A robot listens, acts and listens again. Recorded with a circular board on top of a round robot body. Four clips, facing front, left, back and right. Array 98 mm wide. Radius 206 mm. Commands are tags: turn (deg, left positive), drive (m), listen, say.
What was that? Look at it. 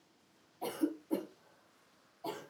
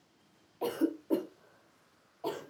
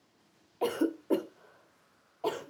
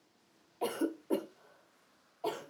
<turn deg="-170"/>
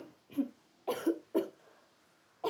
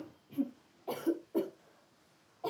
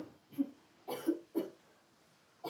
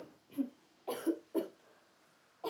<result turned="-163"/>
<say>Found it: a cough, straight ahead.</say>